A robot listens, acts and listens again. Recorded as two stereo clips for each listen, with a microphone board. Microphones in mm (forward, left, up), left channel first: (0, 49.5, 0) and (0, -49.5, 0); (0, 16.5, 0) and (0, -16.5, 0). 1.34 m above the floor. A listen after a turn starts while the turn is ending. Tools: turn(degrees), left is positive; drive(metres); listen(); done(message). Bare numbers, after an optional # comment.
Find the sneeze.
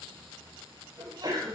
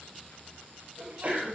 # The sneeze: about 45° right or 135° right.
turn(-45)
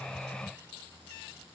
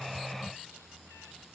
listen()
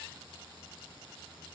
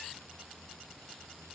done("I heard a sneeze, but can't make it out now. It was about straight ahead or 90° right.")